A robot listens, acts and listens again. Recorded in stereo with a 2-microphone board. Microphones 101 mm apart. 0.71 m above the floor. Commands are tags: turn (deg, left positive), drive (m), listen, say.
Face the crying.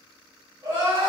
<turn deg="-40"/>
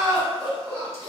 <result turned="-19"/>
<turn deg="-20"/>
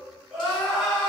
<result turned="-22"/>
<say>Found it: crying, straight ahead.</say>